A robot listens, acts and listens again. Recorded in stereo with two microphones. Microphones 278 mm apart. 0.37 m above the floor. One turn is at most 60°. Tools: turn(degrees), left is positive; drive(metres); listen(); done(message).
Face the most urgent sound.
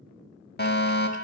turn(degrees=40)
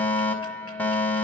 done("Found it: a fire alarm, straight ahead, 2 to 4 m away.")